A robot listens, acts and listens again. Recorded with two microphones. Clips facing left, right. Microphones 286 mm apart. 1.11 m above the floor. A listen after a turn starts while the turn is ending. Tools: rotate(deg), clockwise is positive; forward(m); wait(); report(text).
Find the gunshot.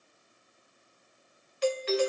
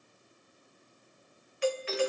wait()
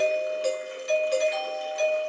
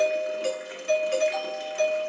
wait()
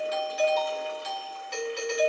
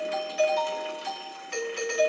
report("I can't make out a gunshot to turn to.")